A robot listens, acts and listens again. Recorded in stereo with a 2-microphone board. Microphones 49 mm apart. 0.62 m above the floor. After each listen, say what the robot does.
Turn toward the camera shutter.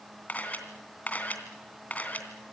Turn 35° left.
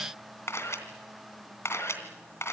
Turn 115° left.
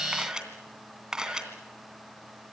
Turn 15° right.
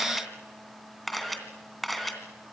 Facing the camera shutter, 2 to 4 m away.